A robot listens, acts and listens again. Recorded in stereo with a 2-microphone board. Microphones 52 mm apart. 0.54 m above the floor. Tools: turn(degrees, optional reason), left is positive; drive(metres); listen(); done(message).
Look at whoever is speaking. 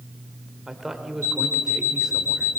turn(degrees=-30)
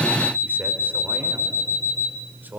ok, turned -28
turn(degrees=-140, reason="So it is at 140° right.")
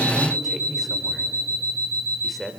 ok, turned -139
done("Facing the man speaking, 2 to 4 m away.")